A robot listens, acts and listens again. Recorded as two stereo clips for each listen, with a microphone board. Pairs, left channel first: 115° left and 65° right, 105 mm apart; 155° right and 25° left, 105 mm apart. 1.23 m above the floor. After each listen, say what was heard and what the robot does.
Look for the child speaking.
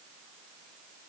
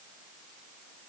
Keep listening.
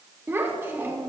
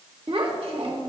Facing the child speaking, 1 to 2 m away.